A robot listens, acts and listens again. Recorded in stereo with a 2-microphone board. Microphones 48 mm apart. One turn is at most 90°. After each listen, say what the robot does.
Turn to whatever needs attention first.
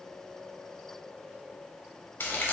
Keep listening.
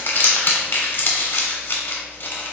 Keep listening.
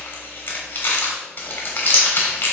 I can't make out anything urgent, only crumpling.